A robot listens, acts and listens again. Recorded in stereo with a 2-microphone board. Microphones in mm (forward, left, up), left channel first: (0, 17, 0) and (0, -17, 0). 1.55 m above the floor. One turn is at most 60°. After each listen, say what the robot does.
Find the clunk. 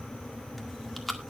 Keep listening.
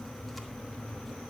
Keep listening.
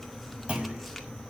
Turn 35° right.
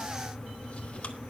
Keep listening.
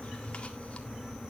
I heard a clunk, but can't make it out now. It was about straight ahead or 110° right.